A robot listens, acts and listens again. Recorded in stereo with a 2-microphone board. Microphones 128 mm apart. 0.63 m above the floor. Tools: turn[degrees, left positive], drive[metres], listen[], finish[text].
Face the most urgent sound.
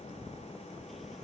Action: listen[]
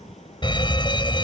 Thought: The fire alarm: about 40° left or 140° left.
Action: turn[40]
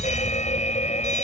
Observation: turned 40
Thought: So it is at 100° left.
Action: turn[100]
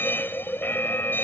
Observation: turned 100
Thought: The fire alarm is now 15° left.
Action: turn[15]
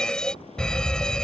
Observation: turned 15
Action: finish[Facing the fire alarm.]